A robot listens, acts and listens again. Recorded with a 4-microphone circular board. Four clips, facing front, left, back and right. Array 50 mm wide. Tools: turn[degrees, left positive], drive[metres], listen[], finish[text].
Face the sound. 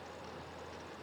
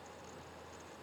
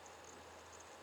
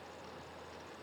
Action: listen[]
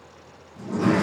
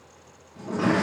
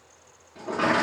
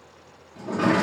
Thought: The sliding door: 170° right.
Action: turn[-170]
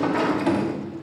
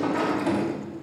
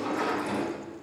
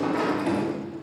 Action: finish[Facing the sliding door, 1 to 2 m away.]